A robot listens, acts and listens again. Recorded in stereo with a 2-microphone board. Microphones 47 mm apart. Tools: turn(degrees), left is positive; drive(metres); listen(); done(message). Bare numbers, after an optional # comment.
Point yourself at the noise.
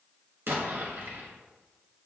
# The explosion: about 55° right or 125° right.
turn(-55)
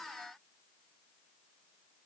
listen()
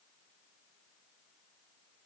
done("I heard an explosion, but can't make it out now. It was about straight ahead or 70° right.")